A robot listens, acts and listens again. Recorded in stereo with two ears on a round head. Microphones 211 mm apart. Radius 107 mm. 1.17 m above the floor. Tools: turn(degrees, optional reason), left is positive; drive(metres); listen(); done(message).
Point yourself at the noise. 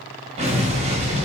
turn(degrees=-25, reason="The explosion: about 25° right or 155° right.")
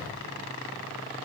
listen()
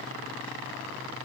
done("I heard an explosion, but can't make it out now. It was about straight ahead or 130° right.")